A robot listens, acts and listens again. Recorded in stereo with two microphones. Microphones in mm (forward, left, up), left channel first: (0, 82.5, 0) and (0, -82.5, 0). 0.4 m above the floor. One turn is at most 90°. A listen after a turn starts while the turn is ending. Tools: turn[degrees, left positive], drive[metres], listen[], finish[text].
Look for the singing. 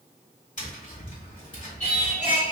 Thought: The singing: about 40° left or 140° left.
Action: turn[40]
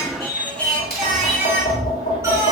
Thought: So it is at 20° right.
Action: turn[-20]
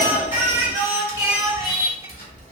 Thought: The singing is now 30° right.
Action: turn[-30]
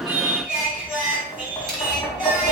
Action: finish[Facing the singing.]